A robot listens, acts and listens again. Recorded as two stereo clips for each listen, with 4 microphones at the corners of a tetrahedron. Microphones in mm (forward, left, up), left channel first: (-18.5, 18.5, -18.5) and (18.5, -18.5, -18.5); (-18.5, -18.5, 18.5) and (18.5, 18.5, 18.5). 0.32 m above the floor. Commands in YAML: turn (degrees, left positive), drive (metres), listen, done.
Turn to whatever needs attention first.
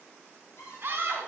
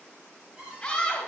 turn: -65
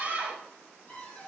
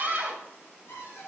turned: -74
done: "Found it: a scream, straight ahead."